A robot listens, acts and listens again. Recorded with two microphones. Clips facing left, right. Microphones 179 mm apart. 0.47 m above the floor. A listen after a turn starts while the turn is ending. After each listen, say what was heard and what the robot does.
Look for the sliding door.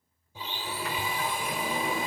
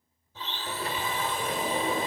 The sliding door: about 35° right or 145° right. Turn 35° right.
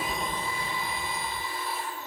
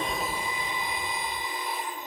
Keep listening.
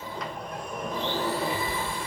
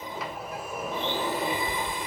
Found it: a sliding door, straight ahead, 1 to 2 m away.